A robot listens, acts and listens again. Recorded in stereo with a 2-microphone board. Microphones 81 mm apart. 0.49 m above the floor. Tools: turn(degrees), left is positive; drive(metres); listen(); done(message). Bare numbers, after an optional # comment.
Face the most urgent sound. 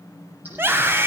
# The scream: about 30° right or 150° right.
turn(-30)
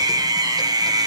# So it is at 120° right.
turn(-120)
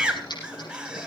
# The scream is now 10° right.
turn(-10)
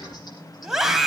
done("Facing the scream, 2 to 4 m away.")